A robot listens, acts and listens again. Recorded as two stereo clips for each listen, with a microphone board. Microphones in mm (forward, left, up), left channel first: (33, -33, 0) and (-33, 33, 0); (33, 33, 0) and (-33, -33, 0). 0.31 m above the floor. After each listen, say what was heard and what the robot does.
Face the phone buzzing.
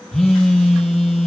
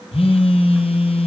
The phone buzzing: 40° left. Turn 40° left.
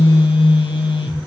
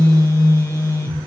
The phone buzzing is now 15° right. Turn 15° right.
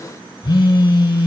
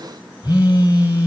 Facing the phone buzzing.